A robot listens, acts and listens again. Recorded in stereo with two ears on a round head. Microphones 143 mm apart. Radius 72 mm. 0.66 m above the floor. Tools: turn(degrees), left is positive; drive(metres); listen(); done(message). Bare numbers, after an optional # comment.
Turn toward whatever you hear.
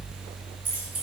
turn(-30)
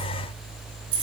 # So it is at 145° right.
turn(-145)
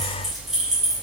done("Facing the keys jangling, 2 to 4 m away.")